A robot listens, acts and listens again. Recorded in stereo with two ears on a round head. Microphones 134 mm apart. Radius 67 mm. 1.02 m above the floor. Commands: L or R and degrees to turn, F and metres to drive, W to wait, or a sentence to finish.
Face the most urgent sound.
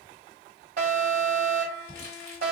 R60
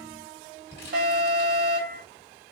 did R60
R65
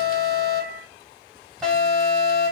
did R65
Found it: an alarm, straight ahead, 2 to 4 m away.